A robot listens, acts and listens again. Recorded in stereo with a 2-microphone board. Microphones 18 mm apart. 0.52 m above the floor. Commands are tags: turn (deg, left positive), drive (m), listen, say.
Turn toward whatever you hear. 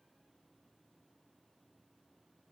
<listen/>
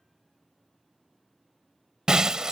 <turn deg="-35"/>
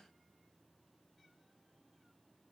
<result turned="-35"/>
<listen/>
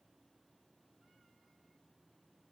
<say>I heard breaking glass, but can't make it out now. It was about straight ahead or 110° right.</say>